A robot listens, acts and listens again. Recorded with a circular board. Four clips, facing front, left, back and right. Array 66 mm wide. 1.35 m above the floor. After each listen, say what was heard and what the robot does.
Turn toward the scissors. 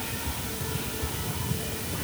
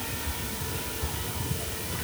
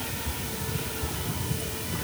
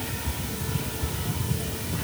Keep listening.
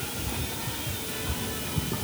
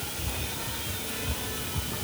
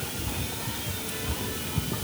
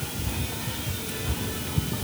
Keep listening.
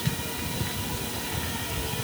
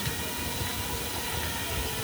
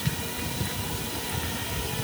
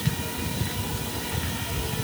I can't make out scissors.